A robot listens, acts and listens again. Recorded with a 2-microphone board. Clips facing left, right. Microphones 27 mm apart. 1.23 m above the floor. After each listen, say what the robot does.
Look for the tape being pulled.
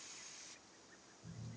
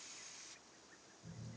Keep listening.
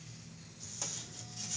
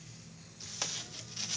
Turn 60° right.
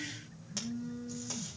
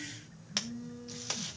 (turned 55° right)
Turn 65° right.
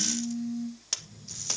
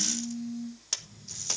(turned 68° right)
Found it: tape being pulled, straight ahead.